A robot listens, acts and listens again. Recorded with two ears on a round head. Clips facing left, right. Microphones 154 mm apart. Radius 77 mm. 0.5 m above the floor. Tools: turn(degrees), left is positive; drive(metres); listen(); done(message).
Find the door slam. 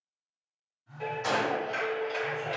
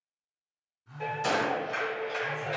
turn(degrees=-35)
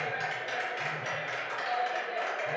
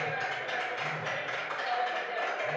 listen()
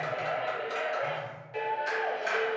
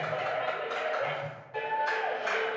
done("I heard a door slam, but can't make it out now. It was about straight ahead or 110° right.")